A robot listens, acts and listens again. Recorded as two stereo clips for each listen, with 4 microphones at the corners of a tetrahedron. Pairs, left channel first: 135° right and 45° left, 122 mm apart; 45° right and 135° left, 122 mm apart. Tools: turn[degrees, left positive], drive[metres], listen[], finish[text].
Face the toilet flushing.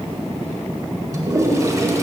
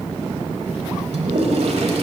Thought: The toilet flushing: 110° left.
Action: turn[110]
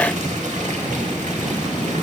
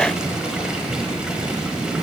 Action: listen[]
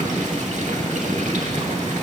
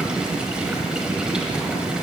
Action: listen[]
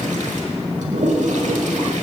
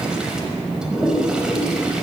Thought: The toilet flushing is now 50° left.
Action: turn[50]
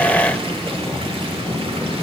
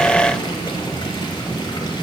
Action: listen[]
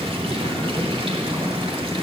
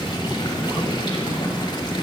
Action: listen[]
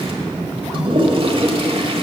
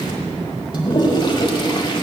Action: finish[Facing the toilet flushing.]